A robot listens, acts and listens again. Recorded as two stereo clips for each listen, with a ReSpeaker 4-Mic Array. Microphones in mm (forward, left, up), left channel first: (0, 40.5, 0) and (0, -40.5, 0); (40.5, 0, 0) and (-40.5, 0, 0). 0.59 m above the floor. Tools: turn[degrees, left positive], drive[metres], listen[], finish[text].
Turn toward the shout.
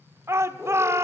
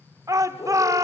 Thought: The shout: 140° right.
Action: turn[-140]
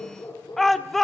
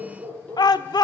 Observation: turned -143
Action: finish[Found it: a shout, straight ahead.]